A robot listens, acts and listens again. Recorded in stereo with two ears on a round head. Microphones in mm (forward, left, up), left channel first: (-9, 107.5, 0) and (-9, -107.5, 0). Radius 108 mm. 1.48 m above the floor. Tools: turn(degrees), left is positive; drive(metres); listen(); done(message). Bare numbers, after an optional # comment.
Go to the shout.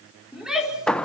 turn(-30)
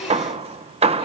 listen()
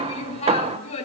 # So it is at 25° left.
turn(25)
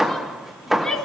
drive(1.0)
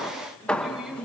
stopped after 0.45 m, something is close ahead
done("Something is in my way. I am facing the shout but have not reached it.")